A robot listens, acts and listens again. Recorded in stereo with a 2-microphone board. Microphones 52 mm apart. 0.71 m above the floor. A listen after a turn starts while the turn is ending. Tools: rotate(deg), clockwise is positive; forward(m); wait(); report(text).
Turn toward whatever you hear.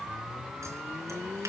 wait()
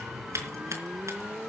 rotate(65)
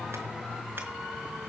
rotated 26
wait()
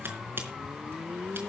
rotate(40)
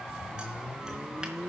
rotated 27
rotate(10)
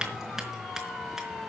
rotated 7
report("Facing the scissors.")